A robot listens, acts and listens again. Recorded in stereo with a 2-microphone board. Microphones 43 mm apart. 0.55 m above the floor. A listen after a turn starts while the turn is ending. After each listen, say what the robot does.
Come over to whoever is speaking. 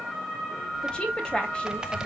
Turn 25° left.
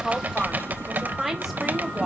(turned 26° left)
Drive 1.0 m forward.
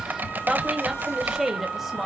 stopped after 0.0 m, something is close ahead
Something is in my way. I am facing the woman speaking but have not reached it.